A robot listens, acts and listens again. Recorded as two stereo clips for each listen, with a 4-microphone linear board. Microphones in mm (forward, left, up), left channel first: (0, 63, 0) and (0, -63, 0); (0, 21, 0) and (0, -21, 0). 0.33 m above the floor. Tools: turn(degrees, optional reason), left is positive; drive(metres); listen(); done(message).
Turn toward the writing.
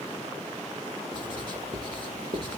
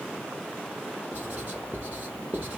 turn(degrees=-40, reason="The writing: about 40° right or 140° right.")
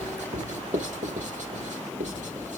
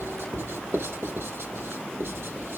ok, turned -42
turn(degrees=-100, reason="So it is at 100° right.")
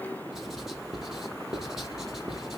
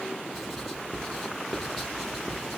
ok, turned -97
done("Found it: writing, straight ahead.")